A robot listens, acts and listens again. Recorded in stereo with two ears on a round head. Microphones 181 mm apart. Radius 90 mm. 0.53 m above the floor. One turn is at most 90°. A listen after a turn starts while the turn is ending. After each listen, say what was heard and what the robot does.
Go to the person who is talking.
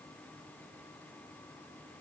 Keep listening.
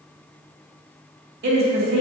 The woman speaking: about 55° right or 125° right. Turn 55° right.
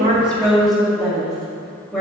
Drive 1.0 m forward.
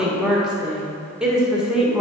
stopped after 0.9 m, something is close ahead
Arrived at the woman speaking, straight ahead.